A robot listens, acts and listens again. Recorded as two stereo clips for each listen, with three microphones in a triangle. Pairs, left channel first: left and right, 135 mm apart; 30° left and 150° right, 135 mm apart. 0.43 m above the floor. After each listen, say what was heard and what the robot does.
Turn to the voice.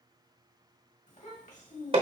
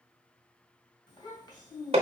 The child speaking: 80° left. Turn 80° left.
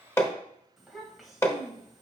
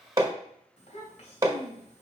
Facing the child speaking.